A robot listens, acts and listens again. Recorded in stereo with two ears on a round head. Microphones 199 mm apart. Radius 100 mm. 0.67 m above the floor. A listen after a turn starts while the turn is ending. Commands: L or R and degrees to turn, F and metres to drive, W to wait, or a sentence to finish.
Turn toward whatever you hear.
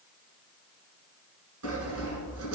R90
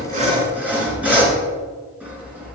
Facing the sawing, 1 to 2 m away.